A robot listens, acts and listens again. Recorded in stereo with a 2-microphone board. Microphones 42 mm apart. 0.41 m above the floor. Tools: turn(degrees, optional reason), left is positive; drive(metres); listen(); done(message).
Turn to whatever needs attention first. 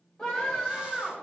turn(degrees=20, reason="The scream: about 20° left or 160° left.")
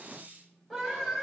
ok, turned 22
done("Facing the scream, 2 to 4 m away.")